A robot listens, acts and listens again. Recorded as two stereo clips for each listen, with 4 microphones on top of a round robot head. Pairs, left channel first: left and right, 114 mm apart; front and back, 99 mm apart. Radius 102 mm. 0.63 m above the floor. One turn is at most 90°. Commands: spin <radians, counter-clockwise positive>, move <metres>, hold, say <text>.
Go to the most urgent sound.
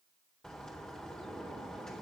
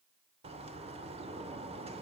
hold
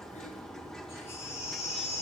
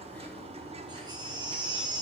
spin 1.57
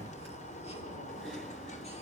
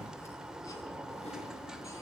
spin 0.79
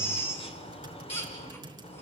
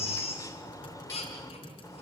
spin 0.35
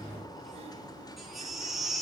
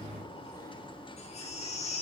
move 1.0
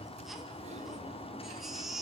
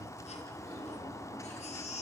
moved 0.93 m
move 1.0
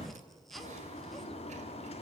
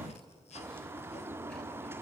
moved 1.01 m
hold
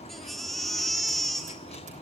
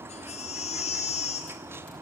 move 1.0
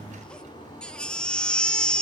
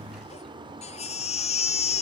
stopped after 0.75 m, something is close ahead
say I am next to the baby crying.